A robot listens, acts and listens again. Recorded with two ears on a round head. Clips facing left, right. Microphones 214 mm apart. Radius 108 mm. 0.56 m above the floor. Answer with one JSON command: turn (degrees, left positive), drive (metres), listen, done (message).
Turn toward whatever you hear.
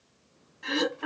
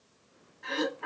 {"turn": 50}
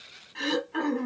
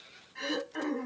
{"turn": 75}
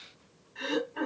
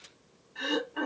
{"done": "Found it: throat clearing, straight ahead."}